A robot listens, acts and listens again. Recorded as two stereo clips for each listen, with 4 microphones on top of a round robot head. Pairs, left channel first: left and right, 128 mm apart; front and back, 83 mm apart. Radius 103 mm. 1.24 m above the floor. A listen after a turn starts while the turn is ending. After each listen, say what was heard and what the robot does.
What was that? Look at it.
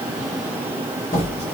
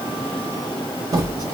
The squeak: 135° left. Turn 135° left.
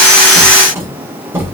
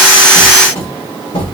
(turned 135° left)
The squeak is now 20° right. Turn 20° right.
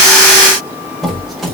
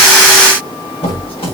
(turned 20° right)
Found it: a squeak, straight ahead, 1 to 2 m away.